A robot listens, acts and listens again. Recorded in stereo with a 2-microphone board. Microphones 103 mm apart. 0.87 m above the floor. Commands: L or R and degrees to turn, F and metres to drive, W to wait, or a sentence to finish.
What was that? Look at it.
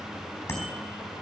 L25
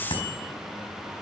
L130
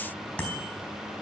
L15
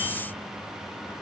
W
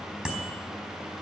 Facing the bicycle bell.